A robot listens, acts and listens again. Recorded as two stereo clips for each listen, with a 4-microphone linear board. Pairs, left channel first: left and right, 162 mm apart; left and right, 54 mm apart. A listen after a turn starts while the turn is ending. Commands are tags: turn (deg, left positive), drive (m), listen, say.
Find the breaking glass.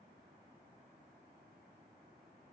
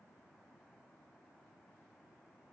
<listen/>
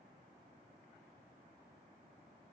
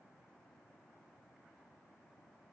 <listen/>
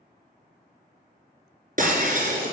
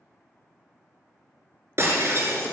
<turn deg="-55"/>
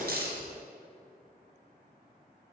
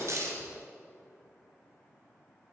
<listen/>
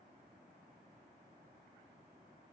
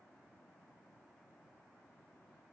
<say>I heard breaking glass, but can't make it out now. It was about straight ahead or 70° right.</say>